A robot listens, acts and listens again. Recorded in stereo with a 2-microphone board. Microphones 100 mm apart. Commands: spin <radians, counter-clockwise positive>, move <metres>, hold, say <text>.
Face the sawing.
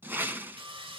spin -1.05
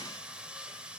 spin -0.17
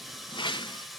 say Found it: sawing, straight ahead.